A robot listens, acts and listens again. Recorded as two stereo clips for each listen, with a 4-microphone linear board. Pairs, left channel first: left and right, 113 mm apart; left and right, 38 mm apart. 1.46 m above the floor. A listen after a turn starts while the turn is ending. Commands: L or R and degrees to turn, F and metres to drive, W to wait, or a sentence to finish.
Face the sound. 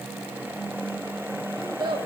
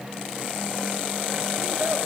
R45
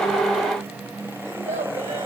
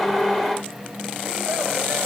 W
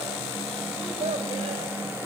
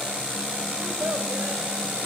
W
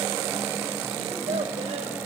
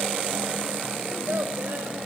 I heard a child speaking, but can't make it out now. It was about straight ahead or 90° right.